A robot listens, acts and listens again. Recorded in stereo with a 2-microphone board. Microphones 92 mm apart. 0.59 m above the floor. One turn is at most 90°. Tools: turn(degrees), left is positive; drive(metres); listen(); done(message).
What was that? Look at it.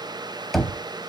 turn(degrees=30)
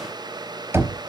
turn(degrees=-30)
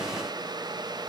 listen()
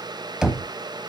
turn(degrees=-10)
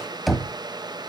done("Found it: knocking, straight ahead.")